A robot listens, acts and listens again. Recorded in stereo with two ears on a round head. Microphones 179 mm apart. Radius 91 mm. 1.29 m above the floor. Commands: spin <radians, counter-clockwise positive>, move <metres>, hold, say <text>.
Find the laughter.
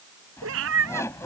spin 0.26
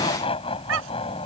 spin 0.52
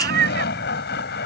spin 2.01
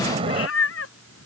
spin -0.52
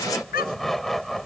say Facing the laughter.